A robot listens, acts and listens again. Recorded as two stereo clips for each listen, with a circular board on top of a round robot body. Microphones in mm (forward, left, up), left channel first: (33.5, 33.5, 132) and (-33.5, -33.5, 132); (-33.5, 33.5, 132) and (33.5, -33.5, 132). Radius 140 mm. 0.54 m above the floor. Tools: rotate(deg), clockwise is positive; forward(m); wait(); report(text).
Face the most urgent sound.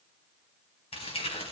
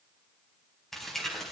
wait()
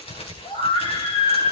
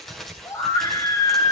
rotate(-80)
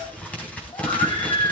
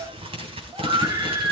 report("Found it: a scream, straight ahead.")